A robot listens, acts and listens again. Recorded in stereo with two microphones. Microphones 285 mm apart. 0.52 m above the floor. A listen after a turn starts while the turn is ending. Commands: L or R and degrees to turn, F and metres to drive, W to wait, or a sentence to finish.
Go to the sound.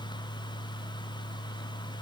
W
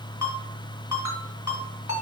L70
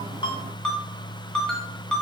F1.0
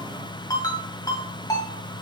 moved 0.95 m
L15
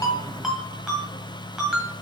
F1.0
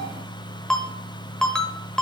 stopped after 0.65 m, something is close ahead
I am next to the ringtone.